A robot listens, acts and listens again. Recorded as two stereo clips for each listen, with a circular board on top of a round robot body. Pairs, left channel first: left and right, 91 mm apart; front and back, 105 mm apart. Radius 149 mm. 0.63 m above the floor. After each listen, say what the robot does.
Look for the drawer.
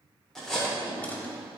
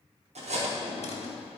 Turn 15° left.
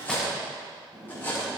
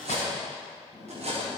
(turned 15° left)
Facing the drawer.